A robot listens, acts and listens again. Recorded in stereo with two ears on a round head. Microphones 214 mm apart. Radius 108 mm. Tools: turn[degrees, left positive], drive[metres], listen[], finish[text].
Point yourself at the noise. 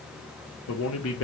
Thought: The man speaking: about 55° left or 125° left.
Action: turn[55]
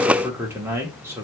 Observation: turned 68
Thought: So it is at 10° right.
Action: turn[-10]
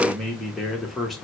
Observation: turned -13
Action: finish[Facing the man speaking, 1 to 2 m away.]